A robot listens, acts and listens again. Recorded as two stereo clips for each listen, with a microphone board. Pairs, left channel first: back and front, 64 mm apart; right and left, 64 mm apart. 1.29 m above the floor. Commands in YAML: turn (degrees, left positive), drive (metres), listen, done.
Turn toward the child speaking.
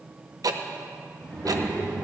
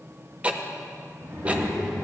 turn: 115
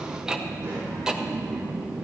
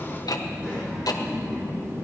turn: 30
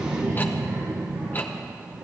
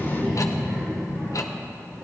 done: "Facing the child speaking, 2 to 4 m away."